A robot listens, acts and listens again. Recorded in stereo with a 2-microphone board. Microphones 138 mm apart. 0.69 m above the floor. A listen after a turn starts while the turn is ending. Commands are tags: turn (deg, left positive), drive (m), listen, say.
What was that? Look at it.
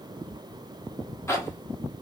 <turn deg="20"/>
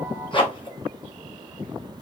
<turn deg="140"/>
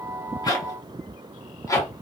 <turn deg="25"/>
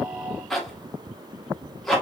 <say>Facing the zipper, under 1 m away.</say>